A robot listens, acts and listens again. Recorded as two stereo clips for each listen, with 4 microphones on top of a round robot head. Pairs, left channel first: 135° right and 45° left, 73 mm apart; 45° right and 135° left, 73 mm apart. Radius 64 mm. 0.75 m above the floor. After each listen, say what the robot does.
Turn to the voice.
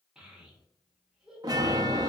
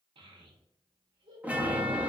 Turn 125° left.
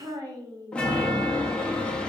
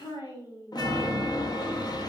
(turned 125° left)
Found it: a child speaking, straight ahead.